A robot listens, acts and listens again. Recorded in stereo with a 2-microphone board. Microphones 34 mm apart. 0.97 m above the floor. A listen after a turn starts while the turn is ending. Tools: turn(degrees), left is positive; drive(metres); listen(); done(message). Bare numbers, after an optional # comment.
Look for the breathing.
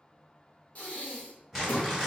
# The breathing: about 45° left or 135° left.
turn(45)
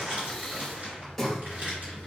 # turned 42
# So it is at 10° left.
turn(10)
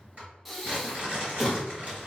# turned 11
done("Facing the breathing, under 1 m away.")